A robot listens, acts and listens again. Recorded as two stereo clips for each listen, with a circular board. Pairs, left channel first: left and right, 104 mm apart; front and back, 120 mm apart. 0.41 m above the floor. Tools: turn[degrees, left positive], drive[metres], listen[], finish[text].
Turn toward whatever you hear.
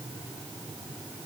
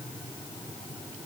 Action: listen[]
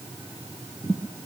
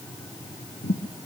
Thought: The thud: 20° right.
Action: turn[-20]
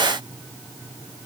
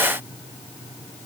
Action: finish[Facing where the thud came from. I can't hear it now.]